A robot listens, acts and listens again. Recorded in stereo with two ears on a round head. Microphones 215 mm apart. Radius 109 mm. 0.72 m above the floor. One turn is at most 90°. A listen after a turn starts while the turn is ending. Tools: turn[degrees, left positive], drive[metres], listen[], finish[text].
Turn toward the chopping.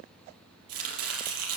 Thought: The chopping: about 65° right or 115° right.
Action: turn[-65]
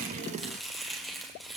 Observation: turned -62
Action: finish[Found it: chopping, straight ahead.]